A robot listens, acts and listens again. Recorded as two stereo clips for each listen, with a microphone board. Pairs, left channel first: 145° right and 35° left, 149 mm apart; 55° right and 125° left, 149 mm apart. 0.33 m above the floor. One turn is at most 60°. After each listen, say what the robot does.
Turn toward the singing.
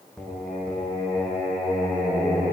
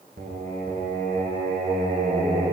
Turn 60° left.
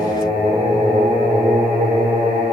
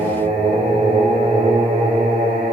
Turn 60° left.
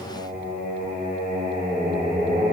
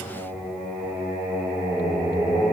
Turn 35° left.
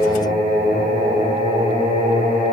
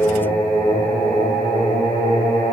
Turn 10° left.
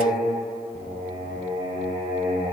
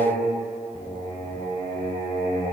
Found it: singing, straight ahead.